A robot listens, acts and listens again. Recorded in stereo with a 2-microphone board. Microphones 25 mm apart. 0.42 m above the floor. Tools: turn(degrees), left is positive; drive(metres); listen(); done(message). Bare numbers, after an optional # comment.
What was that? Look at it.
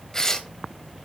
# The tearing paper: about 25° left or 155° left.
turn(25)
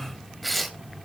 done("Found it: tearing paper, straight ahead.")